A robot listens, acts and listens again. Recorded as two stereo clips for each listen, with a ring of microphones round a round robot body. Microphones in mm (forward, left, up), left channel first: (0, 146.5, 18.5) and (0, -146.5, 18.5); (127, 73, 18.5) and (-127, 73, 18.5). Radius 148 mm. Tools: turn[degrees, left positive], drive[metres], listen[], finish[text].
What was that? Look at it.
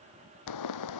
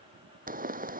Thought: The pop: 120° left.
Action: turn[120]
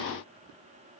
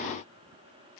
Action: finish[Facing where the pop came from. I can't hear it now.]